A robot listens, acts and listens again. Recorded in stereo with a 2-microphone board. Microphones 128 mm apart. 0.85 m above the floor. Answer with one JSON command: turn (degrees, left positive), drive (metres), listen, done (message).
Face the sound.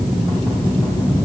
{"listen": true}
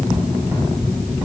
{"listen": true}
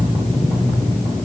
{"done": "I can't make out anything."}